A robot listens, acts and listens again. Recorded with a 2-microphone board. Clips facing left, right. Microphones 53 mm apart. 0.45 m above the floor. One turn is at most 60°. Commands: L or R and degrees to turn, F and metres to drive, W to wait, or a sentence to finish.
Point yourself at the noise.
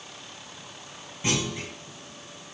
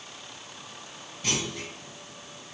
L25
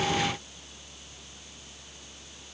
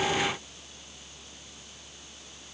W
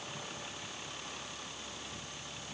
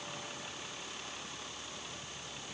I heard a clunk, but can't make it out now. It was about straight ahead or 130° left.